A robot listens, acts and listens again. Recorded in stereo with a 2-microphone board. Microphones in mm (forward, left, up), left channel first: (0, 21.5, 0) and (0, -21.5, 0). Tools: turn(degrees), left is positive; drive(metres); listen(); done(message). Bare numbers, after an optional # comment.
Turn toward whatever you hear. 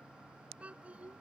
# The child speaking: about 30° right or 150° right.
turn(-30)
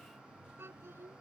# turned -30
# So it is at 110° right.
turn(-110)
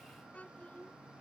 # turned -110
# The child speaking is now 35° left.
turn(35)
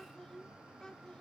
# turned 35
# The child speaking is now 15° left.
turn(15)
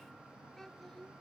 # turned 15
# The child speaking is now 10° left.
turn(10)
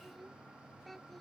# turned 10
done("Found it: a child speaking, straight ahead.")